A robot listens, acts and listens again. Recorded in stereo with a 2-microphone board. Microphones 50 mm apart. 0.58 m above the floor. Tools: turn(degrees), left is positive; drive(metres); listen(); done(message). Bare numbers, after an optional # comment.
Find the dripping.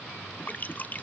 # The dripping: about 35° left or 145° left.
turn(35)
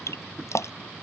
# So it is at 110° left.
turn(110)
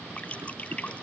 # The dripping is now 25° left.
turn(25)
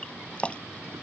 # The dripping is now 20° left.
turn(20)
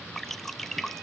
done("Found it: dripping, straight ahead.")